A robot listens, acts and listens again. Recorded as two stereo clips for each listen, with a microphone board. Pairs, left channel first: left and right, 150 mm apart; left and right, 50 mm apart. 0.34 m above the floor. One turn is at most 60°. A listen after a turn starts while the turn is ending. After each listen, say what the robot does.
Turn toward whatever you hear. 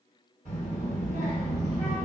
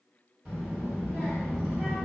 Turn 15° right.
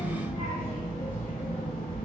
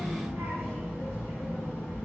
Turn 60° right.
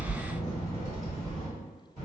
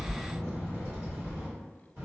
Turn 60° right.
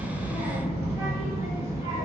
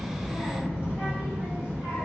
Turn 30° right.
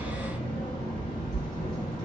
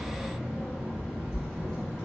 Found it: a child speaking, straight ahead, 1 to 2 m away.